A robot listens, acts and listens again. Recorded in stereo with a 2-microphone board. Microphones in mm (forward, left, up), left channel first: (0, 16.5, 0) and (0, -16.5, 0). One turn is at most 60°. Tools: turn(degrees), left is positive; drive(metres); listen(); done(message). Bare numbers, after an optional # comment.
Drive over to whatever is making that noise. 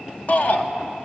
# The shout: about 50° left or 130° left.
turn(50)
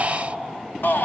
# So it is at 80° left.
turn(60)
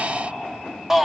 # The shout is now 15° right.
turn(-15)
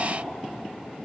listen()
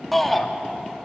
drive(1.0)
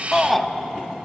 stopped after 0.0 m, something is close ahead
done("Something is in my way. I am facing the shout but have not reached it.")